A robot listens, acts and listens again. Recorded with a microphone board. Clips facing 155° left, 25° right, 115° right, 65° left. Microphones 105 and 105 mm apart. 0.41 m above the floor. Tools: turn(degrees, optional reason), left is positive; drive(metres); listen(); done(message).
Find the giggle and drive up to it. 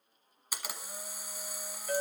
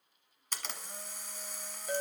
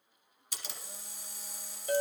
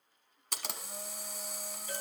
listen()
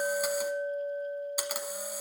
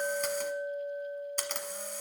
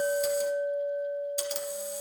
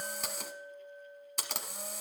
listen()
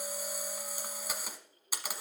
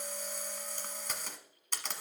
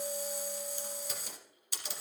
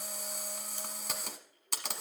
done("I can't make out a giggle, only a clink and a camera shutter.")